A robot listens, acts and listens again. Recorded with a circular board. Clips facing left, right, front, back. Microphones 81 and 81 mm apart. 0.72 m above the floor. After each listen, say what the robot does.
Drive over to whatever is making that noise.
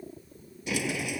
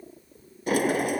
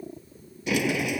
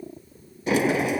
Turn 130° right.
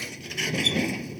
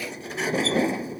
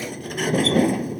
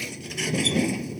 Turn 40° right.
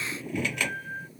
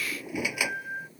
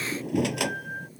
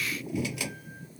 Turn 10° right.
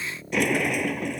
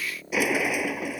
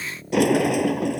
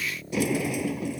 Drive 1.0 m forward.
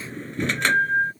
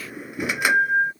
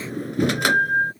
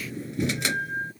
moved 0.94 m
Turn 10° right.
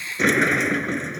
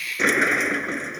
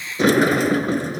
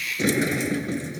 Drive 1.0 m forward.
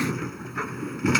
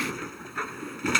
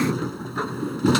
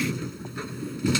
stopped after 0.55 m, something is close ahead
I am next to the sliding door.